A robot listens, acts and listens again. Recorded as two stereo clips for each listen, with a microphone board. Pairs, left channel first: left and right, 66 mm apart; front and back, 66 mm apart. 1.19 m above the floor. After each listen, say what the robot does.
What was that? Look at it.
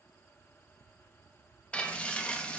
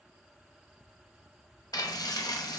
Turn 20° left.
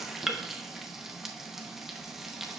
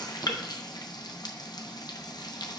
Found it: frying, straight ahead, under 1 m away.